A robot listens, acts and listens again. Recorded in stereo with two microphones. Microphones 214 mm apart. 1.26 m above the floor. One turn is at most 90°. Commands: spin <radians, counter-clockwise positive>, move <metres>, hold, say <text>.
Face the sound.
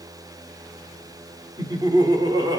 spin -0.35
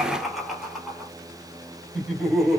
spin 0.52
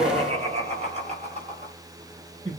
spin -0.52
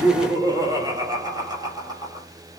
spin -0.26
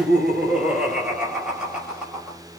say Found it: laughter, straight ahead, over 4 m away.